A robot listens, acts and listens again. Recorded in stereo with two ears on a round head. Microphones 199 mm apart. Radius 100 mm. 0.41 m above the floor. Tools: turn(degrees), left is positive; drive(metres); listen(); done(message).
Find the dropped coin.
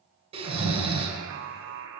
listen()
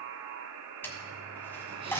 turn(degrees=30)
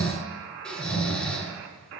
listen()
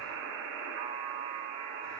done("I heard a dropped coin, but can't make it out now. It was about 20° right or 140° left.")